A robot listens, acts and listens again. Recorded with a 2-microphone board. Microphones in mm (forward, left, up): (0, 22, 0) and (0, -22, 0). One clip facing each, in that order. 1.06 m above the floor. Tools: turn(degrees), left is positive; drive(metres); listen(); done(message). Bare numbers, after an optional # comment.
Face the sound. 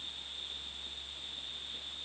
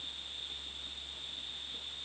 listen()
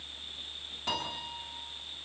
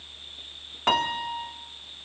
# The piano: about 65° right or 115° right.
turn(-65)
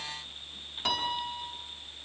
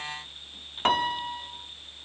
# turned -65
# So it is at 50° right.
turn(-50)
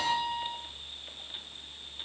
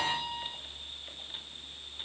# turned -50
done("Facing the piano.")